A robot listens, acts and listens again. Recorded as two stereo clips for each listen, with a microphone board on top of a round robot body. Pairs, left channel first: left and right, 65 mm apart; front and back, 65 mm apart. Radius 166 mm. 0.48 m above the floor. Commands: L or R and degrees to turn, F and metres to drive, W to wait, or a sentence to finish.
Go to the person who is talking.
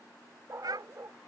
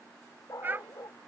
R120
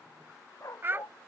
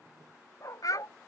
R30
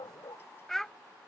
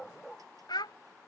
F1.0
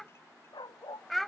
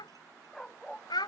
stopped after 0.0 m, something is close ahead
Something is in my way. I am facing the child speaking but have not reached it.